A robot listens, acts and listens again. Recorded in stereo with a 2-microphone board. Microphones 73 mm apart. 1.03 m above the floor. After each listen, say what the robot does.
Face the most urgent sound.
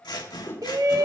Turn 50° right.
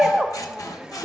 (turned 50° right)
Facing the shout, under 1 m away.